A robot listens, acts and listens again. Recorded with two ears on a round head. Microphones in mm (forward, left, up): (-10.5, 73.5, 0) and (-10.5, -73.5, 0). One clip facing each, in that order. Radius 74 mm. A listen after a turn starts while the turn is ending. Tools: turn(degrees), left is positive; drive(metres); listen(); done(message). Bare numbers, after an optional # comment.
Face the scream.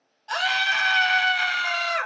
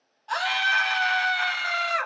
# The scream: about 20° left or 160° left.
turn(20)
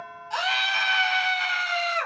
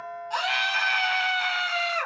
done("Found it: a scream, straight ahead.")